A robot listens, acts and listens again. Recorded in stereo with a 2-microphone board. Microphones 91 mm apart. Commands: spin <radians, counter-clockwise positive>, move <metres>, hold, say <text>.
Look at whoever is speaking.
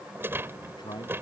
spin 0.87
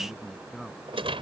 say Found it: a man speaking, straight ahead.